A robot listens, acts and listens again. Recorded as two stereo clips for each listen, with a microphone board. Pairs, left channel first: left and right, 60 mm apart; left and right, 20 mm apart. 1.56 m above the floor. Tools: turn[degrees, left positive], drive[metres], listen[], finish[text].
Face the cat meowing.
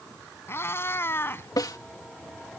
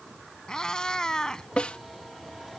Thought: The cat meowing: about 35° left or 145° left.
Action: turn[35]
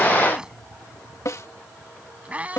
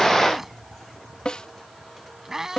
Thought: So it is at 25° right.
Action: turn[-25]
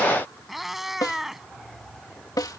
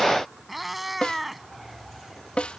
Action: finish[Facing the cat meowing.]